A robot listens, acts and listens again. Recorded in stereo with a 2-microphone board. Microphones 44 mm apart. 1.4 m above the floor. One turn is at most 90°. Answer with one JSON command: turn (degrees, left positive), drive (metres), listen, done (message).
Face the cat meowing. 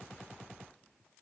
{"listen": true}
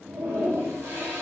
{"listen": true}
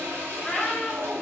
{"turn": 30}
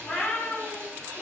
{"turn": 90}
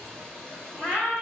{"turn": 55}
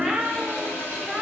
{"done": "Facing the cat meowing."}